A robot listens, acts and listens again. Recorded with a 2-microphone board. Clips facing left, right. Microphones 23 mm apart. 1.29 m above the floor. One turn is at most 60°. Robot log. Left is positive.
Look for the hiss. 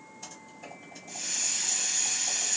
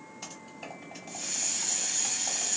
note: The hiss: about 30° left or 150° left.
cmd yaw +30
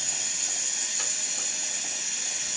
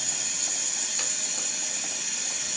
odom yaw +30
end: Found it: a hiss, straight ahead, 1 to 2 m away.